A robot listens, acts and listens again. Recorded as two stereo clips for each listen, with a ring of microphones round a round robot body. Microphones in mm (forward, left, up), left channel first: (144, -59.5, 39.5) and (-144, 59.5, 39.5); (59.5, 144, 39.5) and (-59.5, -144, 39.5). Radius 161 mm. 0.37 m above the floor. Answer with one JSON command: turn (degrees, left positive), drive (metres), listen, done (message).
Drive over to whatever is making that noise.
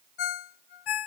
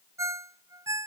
{"turn": -30}
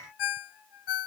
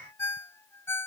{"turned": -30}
{"turn": -15}
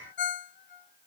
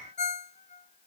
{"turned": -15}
{"drive": 1.0}
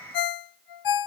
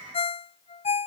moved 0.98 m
{"drive": 1.0}
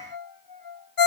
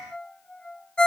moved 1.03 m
{"turn": -20}
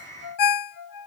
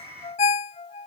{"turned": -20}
{"drive": 1.0}
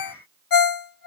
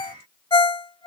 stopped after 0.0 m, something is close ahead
{"turn": -10}
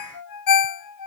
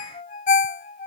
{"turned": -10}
{"done": "I am next to the ringtone."}